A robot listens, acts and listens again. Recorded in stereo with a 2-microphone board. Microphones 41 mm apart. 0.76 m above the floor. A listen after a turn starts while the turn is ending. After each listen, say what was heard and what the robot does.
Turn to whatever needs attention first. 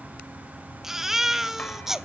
Turn 30° right.
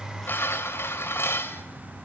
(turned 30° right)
Keep listening.
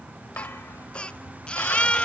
So it is at 25° left. Turn 25° left.
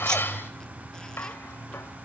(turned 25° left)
Keep listening.
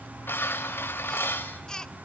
The baby crying is now 15° left. Turn 15° left.
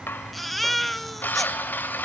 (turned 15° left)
Found it: a baby crying, straight ahead.